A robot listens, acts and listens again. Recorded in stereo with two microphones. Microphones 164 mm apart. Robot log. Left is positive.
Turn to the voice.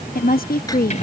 note: The woman speaking: about 60° left or 120° left.
cmd yaw +60
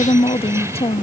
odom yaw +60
note: So it is at 40° left.
cmd yaw +40
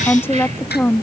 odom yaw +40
note: The woman speaking is now 15° left.
cmd yaw +15
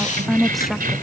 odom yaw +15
end: Facing the woman speaking.